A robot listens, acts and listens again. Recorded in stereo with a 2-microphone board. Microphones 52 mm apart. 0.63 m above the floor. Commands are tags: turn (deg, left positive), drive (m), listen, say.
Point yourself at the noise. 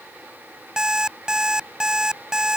<turn deg="-30"/>
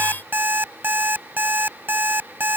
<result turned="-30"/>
<turn deg="-140"/>
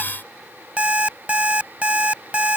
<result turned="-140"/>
<turn deg="-25"/>
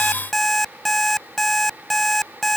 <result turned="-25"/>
<say>Found it: an alarm clock, straight ahead.</say>